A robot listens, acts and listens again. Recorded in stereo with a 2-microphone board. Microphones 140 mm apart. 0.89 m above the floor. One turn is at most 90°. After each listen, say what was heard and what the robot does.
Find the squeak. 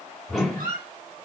Turn 90° right.
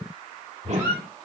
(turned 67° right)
So it is at 20° right. Turn 20° right.
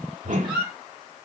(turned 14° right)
The squeak is now 10° right. Turn 10° right.
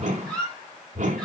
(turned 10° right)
Facing the squeak, 2 to 4 m away.